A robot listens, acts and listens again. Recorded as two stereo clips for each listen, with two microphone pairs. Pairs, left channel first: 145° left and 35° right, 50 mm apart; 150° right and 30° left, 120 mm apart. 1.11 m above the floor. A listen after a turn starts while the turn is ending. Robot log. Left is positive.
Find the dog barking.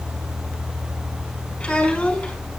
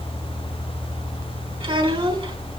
cmd idle
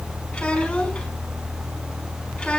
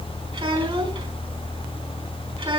cmd idle
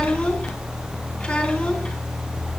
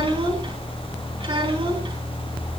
end: I can't make out a dog barking to turn to.